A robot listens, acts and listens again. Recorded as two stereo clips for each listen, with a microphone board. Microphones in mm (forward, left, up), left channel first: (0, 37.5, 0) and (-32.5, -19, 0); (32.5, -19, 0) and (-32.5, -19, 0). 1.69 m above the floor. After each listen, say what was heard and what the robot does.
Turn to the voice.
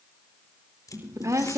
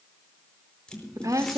The woman speaking: 155° right. Turn 155° right.
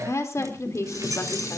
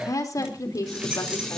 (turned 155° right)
The woman speaking is now 25° left. Turn 25° left.
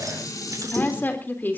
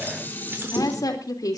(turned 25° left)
Facing the woman speaking.